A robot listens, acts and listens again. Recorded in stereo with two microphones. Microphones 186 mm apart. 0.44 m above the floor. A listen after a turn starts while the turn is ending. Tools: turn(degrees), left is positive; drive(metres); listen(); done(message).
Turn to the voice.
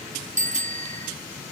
listen()
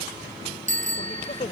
turn(degrees=45)
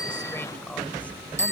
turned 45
listen()
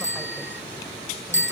listen()
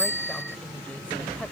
done("I heard a woman speaking, but can't make it out now. It was about straight ahead or 90° left.")